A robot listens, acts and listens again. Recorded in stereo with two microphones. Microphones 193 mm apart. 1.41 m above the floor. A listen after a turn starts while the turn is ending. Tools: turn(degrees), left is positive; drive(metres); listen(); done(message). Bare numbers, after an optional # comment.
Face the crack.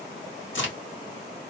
turn(90)
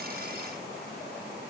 done("Facing where the crack came from. I can't hear it now.")